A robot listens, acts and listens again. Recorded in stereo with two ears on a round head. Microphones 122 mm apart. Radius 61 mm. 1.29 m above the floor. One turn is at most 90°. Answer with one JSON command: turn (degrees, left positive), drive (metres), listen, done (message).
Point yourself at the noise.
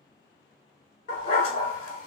{"turn": 45}
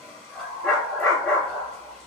{"turn": 10}
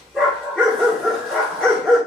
{"done": "Facing the dog barking, 1 to 2 m away."}